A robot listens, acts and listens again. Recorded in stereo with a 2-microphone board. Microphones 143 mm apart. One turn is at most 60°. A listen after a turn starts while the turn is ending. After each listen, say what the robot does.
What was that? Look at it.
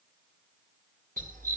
Turn 60° right.
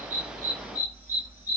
Turn 15° right.
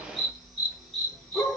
Facing the dog barking, 2 to 4 m away.